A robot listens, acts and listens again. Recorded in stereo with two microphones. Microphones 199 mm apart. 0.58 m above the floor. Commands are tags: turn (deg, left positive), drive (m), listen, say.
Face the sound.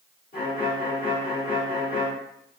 <turn deg="50"/>
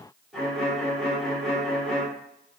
<say>Found it: a violin, straight ahead, 1 to 2 m away.</say>